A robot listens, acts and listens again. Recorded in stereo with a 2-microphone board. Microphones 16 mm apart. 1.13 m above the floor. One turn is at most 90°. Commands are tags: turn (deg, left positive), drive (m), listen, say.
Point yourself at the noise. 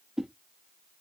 <turn deg="-45"/>
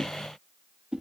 <turn deg="-85"/>
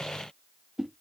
<turn deg="-25"/>
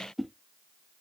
<turn deg="-10"/>
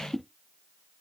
<say>Facing the whoosh, 1 to 2 m away.</say>